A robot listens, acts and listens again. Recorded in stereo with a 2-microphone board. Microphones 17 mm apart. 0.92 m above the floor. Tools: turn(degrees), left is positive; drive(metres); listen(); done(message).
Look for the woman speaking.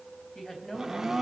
turn(degrees=35)
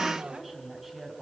done("Facing the woman speaking, over 4 m away.")